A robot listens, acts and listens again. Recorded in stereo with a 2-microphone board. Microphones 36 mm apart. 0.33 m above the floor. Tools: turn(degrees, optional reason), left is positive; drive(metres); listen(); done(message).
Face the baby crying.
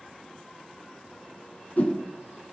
listen()
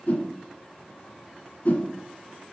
listen()
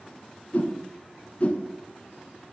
done("I can't make out a baby crying to turn to.")